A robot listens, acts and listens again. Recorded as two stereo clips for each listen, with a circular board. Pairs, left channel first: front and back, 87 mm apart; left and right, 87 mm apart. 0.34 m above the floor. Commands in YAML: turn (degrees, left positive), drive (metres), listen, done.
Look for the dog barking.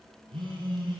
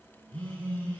listen: true
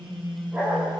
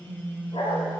turn: 105
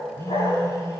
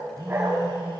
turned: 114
turn: -20
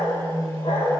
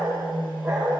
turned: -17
turn: -10
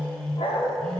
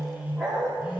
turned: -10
done: "Found it: a dog barking, straight ahead."